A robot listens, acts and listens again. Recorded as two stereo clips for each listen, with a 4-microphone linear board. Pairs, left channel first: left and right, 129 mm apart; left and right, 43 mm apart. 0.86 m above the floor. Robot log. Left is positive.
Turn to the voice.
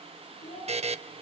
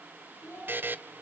note: The child speaking: about 45° left or 135° left.
cmd yaw +45
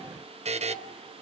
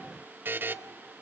cmd idle
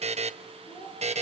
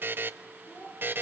note: So it is at 90° left.
cmd yaw +90
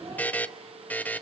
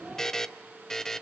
cmd idle
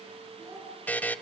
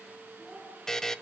end: Found it: a child speaking, straight ahead.